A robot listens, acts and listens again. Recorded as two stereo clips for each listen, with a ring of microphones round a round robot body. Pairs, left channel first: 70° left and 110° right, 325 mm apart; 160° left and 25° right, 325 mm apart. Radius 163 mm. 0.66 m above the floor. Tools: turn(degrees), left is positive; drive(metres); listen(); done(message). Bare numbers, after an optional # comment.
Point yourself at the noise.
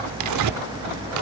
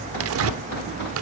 # The tearing paper: 75° right.
turn(-75)
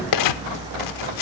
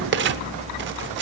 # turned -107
# The tearing paper is now 35° left.
turn(35)
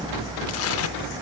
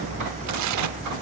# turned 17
# Nothing new. It was at 20° left.
turn(20)
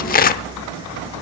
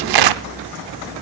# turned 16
done("Facing the tearing paper, under 1 m away.")